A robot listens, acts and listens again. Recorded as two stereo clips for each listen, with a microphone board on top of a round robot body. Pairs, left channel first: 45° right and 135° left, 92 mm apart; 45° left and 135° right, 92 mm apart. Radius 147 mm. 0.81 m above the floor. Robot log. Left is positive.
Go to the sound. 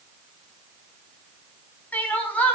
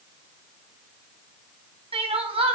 note: The crying: 120° right.
cmd yaw -120
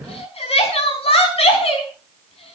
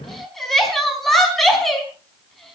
note: The crying is now 45° right.
cmd yaw -45
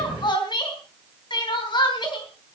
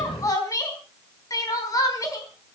note: The crying is now 10° right.
cmd yaw -10
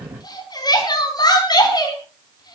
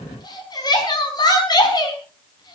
cmd fwd 1.0
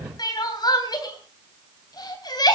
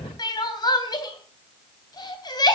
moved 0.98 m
cmd fwd 1.0
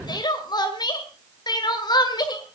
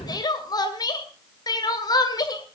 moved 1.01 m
cmd fwd 1.0
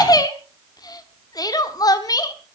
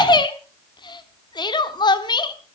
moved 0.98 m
cmd fwd 1.0
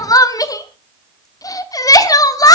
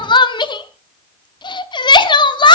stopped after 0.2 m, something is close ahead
end: I am next to the crying.